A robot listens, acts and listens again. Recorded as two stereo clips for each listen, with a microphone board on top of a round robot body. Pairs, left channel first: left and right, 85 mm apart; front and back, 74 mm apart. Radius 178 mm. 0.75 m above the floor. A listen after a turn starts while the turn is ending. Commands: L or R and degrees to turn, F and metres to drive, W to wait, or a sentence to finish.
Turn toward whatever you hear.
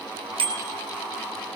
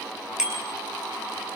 R100
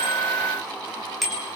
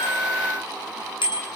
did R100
Facing the bicycle bell, over 4 m away.